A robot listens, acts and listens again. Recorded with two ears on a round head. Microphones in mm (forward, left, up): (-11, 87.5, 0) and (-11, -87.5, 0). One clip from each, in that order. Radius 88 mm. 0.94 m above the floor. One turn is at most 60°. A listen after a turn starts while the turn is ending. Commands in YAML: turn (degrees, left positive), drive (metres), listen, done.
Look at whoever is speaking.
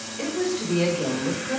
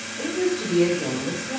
turn: 50
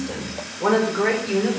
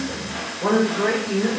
turn: 60
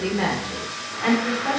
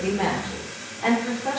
done: "Facing the woman speaking, 2 to 4 m away."